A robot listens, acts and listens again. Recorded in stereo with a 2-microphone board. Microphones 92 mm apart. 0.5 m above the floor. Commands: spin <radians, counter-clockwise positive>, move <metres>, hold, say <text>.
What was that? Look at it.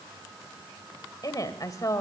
spin 0.61
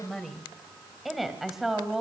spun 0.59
say Found it: a woman speaking, straight ahead.